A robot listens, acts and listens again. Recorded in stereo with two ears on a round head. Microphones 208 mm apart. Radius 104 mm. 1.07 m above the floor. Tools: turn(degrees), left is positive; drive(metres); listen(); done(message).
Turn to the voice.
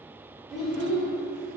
turn(degrees=30)
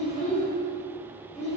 turn(degrees=150)
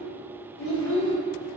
turn(degrees=65)
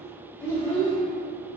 turn(degrees=10)
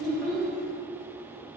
done("Found it: a child speaking, straight ahead, 1 to 2 m away.")